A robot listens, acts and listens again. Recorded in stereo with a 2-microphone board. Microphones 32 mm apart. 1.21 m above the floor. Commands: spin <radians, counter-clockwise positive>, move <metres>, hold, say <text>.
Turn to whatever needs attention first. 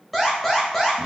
spin 0.52
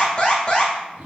spin 2.53
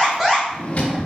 say Found it: an alarm, straight ahead.